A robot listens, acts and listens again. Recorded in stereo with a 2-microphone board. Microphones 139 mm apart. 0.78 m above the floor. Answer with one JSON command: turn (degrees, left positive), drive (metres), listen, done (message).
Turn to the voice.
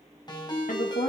{"turn": 70}
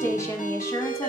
{"turn": 20}
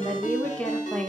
{"turn": 10}
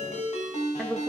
{"done": "Facing the woman speaking, 1 to 2 m away."}